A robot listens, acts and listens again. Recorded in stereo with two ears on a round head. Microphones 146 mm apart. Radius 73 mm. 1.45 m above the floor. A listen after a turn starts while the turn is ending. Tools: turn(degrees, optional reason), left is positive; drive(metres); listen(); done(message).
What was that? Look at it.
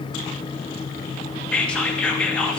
turn(degrees=30)
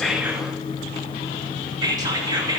turn(degrees=-25, reason="So it is at 25° right.")
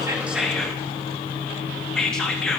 done("Found it: whispering, straight ahead.")